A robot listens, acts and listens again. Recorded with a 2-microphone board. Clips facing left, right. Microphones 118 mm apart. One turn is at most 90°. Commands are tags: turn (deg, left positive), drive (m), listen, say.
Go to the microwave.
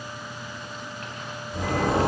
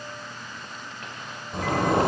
<listen/>
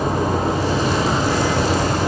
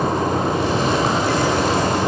<listen/>
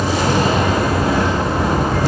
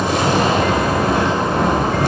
<say>I can't make out a microwave to turn to.</say>